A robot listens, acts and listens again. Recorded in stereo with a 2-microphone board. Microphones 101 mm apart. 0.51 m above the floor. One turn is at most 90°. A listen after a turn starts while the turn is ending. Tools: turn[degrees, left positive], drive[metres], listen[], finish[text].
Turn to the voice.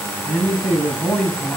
Action: turn[30]
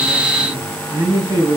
Thought: So it is at 25° right.
Action: turn[-25]
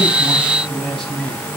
Action: finish[Found it: a man speaking, straight ahead.]